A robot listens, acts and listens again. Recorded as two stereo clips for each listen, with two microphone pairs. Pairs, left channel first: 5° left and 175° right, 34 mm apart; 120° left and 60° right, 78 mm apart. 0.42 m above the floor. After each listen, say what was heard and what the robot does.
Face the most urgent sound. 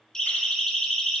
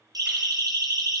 The siren: 60° right. Turn 60° right.
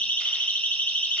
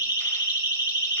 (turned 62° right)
Facing the siren.